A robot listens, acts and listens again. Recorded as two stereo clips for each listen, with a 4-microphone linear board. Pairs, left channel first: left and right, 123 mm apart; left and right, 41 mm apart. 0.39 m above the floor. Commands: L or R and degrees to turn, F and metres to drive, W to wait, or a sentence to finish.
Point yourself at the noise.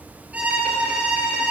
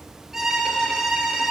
R30
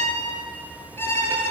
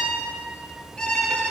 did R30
L20
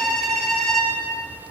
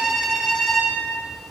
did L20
Found it: a violin, straight ahead, over 4 m away.